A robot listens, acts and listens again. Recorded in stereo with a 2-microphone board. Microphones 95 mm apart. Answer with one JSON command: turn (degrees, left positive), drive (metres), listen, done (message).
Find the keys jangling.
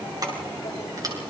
{"turn": -40}
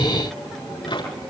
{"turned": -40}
{"listen": true}
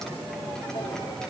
{"listen": true}
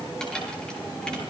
{"turn": 10}
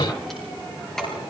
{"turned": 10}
{"done": "Found it: keys jangling, straight ahead."}